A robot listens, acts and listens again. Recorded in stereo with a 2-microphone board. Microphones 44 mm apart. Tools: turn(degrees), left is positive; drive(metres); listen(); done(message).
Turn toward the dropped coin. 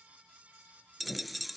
turn(degrees=30)
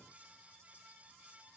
listen()
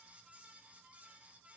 done("I heard a dropped coin, but can't make it out now. It was about 25° right or 145° left.")